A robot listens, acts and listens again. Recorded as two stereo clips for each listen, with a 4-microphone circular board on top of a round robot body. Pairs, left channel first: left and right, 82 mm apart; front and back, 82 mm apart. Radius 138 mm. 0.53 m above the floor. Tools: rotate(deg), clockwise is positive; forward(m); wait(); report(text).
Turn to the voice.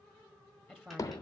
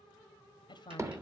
report("Found it: a woman speaking, straight ahead.")